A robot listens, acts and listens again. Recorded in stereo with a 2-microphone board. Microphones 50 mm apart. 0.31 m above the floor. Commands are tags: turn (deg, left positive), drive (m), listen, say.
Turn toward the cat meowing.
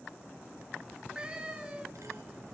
<turn deg="-20"/>
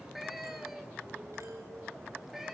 <turn deg="-30"/>
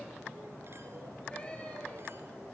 <listen/>
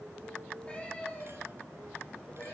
<turn deg="20"/>
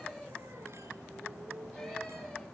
<listen/>
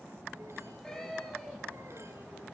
<turn deg="10"/>
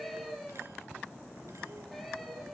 <say>Found it: a cat meowing, straight ahead, over 4 m away.</say>